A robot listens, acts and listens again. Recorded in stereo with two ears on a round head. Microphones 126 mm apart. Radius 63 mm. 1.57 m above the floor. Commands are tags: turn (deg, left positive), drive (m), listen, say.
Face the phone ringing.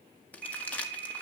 <turn deg="-55"/>
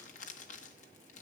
<listen/>
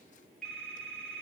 <say>Facing the phone ringing, 2 to 4 m away.</say>